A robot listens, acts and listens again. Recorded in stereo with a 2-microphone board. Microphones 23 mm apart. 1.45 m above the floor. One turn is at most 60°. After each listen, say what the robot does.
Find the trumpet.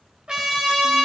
Turn 35° right.
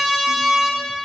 Facing the trumpet, 2 to 4 m away.